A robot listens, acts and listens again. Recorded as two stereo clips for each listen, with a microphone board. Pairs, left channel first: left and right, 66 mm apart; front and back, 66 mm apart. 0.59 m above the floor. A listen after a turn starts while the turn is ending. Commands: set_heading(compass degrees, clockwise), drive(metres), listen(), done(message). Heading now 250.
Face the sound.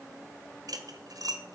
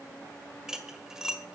set_heading(350)
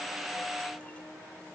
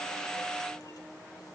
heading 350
listen()
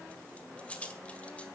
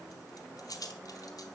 set_heading(330)
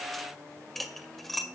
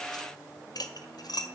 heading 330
done("Found it: cutlery clinking, straight ahead.")